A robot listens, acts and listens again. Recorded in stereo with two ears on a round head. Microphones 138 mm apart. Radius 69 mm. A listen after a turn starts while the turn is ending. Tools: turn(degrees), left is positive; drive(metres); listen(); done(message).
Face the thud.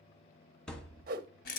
turn(degrees=30)
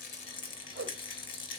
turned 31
listen()
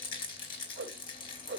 done("I heard a thud, but can't make it out now. It was about 25° right or 145° left.")